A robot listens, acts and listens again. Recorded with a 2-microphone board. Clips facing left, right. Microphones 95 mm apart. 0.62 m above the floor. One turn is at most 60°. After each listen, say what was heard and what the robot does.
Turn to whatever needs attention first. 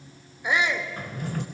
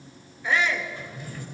The shout: about 20° left or 160° left. Turn 20° left.
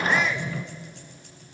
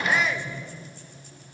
Facing the shout.